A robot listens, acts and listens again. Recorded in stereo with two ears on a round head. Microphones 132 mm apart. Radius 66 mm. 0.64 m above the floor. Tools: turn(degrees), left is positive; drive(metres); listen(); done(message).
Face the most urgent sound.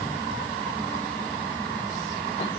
listen()
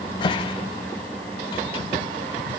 listen()
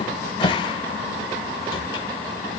done("I can't make out anything urgent, only a cupboard door.")